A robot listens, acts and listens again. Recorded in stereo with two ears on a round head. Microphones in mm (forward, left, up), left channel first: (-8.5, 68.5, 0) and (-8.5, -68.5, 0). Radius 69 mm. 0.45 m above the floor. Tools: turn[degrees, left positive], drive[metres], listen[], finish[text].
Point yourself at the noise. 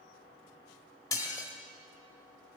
Thought: The dishes clattering: about 20° left or 160° left.
Action: turn[20]
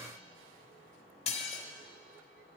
Thought: So it is at 135° left.
Action: turn[135]
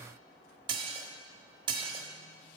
Thought: The dishes clattering is now 35° right.
Action: turn[-35]
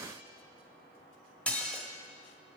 Thought: The dishes clattering is now 10° left.
Action: turn[10]
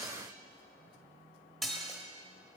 Action: finish[Facing the dishes clattering, 1 to 2 m away.]